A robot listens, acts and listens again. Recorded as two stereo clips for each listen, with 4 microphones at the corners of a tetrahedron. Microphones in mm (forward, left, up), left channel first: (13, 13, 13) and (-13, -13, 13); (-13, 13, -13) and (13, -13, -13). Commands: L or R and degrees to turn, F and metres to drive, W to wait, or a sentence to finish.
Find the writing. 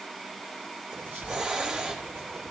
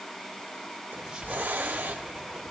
R115
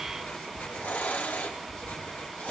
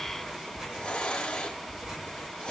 L25
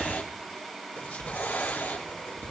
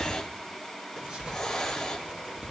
L15
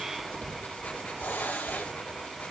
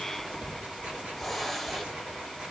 Found it: writing, straight ahead.